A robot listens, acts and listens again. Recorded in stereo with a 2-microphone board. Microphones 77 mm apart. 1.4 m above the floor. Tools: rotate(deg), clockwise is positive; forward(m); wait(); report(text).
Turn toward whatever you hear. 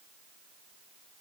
wait()
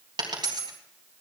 rotate(70)
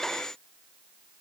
wait()
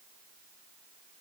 report("I heard a dropped coin, but can't make it out now. It was about straight ahead or 40° right.")